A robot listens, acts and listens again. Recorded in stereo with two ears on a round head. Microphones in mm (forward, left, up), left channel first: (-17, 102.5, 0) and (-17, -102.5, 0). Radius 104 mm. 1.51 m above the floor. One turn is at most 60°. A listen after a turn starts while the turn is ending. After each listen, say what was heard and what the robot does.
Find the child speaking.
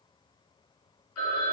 Keep listening.
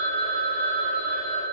Keep listening.
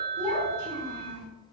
Turn 30° right.
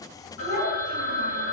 So it is at 20° left. Turn 20° left.
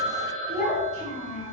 Found it: a child speaking, straight ahead.